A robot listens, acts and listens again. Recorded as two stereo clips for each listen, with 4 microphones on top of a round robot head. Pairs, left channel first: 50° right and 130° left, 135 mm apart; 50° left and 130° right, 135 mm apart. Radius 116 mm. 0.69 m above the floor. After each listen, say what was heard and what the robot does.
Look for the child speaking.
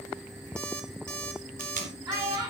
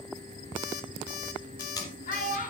The child speaking: 70° left. Turn 70° left.
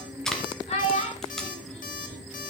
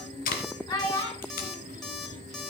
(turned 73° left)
Found it: a child speaking, straight ahead.